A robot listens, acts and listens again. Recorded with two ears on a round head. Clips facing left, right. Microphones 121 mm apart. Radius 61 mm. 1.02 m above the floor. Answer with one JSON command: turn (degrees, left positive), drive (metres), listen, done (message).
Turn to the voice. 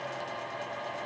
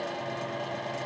{"listen": true}
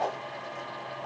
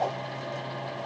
{"listen": true}
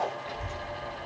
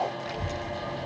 {"turn": -75}
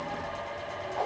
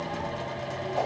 {"turn": -40}
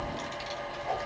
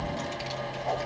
{"turn": -15}
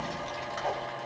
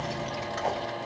{"turn": -15}
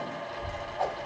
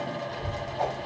{"done": "Facing the child speaking."}